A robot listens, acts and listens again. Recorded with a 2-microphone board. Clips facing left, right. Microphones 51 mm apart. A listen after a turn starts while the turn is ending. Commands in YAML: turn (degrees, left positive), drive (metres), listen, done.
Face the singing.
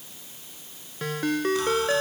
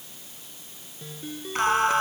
turn: -50
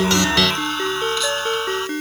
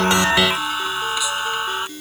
turn: -15
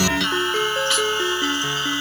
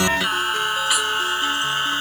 turn: -15
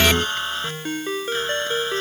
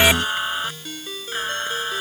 turn: -10
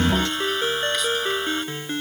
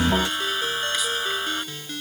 done: "Found it: singing, straight ahead."